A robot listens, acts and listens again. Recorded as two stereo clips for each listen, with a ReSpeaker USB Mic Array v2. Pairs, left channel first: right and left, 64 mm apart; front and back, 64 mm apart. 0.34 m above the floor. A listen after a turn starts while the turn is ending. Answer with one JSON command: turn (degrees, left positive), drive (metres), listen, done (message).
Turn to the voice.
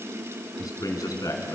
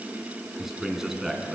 {"turn": -100}
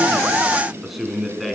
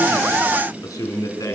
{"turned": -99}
{"done": "Found it: a man speaking, straight ahead."}